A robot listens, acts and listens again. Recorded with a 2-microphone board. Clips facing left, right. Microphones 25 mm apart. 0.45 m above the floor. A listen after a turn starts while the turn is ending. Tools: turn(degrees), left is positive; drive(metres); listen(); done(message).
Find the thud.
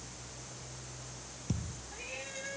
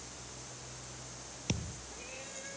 turn(degrees=-60)
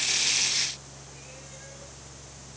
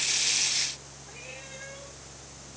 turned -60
listen()
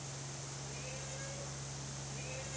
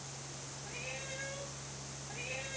done("I heard a thud, but can't make it out now. It was about straight ahead or 60° right.")